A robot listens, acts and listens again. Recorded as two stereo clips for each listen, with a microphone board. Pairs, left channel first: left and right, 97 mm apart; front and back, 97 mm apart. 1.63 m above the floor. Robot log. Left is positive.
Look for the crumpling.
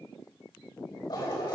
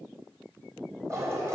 cmd idle
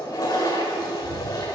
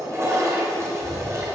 cmd idle
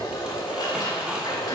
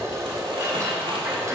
note: The crumpling: 170° right.
cmd yaw -170
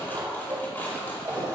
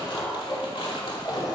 note: The crumpling is now 20° left.
cmd yaw +20
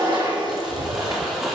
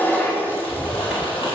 cmd idle
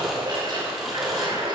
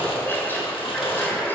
cmd idle
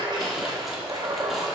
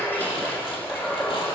end: I heard crumpling from this way, but can't make it out now.